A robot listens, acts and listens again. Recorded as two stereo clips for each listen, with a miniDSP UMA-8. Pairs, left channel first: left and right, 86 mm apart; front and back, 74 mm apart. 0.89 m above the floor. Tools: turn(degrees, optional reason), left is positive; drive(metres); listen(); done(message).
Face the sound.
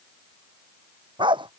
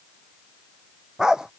turn(degrees=-100, reason="The dog barking: 100° right.")
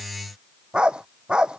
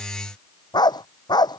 turn(degrees=-10, reason="The dog barking is now 10° right.")
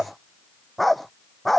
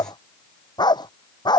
done("Found it: a dog barking, straight ahead.")